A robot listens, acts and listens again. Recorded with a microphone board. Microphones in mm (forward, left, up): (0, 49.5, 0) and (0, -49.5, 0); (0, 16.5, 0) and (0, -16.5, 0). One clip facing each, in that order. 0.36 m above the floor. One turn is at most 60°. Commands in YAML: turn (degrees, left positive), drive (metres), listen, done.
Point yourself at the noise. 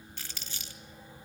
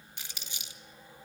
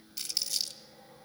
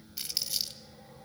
turn: -15
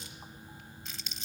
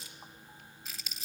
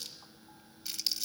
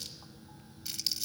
done: "Found it: crumpling, straight ahead."